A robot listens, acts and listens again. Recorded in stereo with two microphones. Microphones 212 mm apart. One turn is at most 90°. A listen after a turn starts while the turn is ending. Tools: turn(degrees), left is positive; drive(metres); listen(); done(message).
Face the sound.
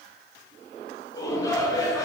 turn(degrees=15)
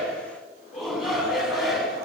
done("Found it: a shout, straight ahead, over 4 m away.")